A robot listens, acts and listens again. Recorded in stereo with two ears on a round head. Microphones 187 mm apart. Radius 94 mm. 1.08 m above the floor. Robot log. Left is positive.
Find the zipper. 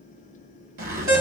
note: The zipper: about 45° right or 135° right.
cmd yaw -45
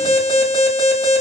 cmd idle
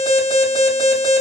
cmd idle
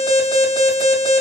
end: I heard a zipper, but can't make it out now. It was about straight ahead or 90° right.